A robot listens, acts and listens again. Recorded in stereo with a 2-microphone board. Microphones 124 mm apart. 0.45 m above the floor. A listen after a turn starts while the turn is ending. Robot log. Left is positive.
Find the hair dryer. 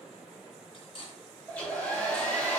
cmd yaw +30
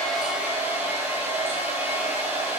note: So it is at 20° right.
cmd yaw -20
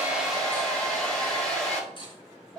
end: Facing the hair dryer, 2 to 4 m away.